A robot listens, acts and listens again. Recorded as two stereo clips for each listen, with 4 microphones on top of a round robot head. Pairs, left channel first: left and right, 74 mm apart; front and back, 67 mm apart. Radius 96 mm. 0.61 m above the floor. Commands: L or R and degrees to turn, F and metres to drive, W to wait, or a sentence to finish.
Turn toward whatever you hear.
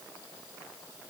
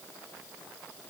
W
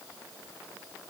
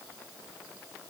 W
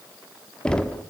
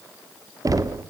L170
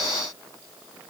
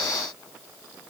W
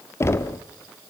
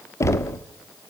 L40
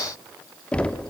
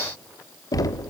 L15
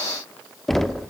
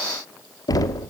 Facing the knocking.